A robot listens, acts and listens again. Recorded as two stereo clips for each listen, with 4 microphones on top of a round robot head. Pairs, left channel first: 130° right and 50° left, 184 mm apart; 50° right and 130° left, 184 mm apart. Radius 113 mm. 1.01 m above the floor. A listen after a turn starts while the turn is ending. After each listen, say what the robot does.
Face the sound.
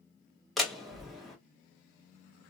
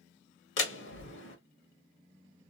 Turn 40° right.
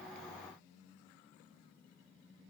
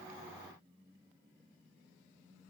I heard a door slam from this way, but can't make it out now.